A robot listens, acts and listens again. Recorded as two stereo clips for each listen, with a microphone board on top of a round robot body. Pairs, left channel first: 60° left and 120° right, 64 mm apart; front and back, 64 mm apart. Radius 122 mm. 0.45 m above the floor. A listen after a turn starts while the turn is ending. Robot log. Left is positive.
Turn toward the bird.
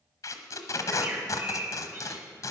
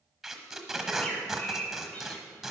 note: The bird: 65° right.
cmd yaw -65
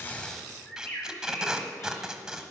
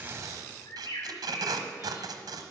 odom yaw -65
end: Found it: a bird, straight ahead, 2 to 4 m away.